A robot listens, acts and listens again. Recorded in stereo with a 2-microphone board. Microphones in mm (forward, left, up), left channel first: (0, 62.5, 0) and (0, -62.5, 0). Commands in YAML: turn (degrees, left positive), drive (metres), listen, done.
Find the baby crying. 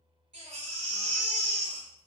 turn: -65
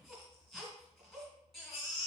done: "Found it: a baby crying, straight ahead."